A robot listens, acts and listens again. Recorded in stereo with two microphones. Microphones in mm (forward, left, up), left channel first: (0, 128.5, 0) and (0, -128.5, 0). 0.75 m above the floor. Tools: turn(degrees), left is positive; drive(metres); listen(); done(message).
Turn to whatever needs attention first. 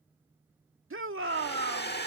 turn(degrees=-60)
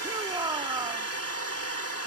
turn(degrees=-20)
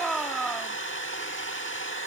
done("Found it: a shout, straight ahead.")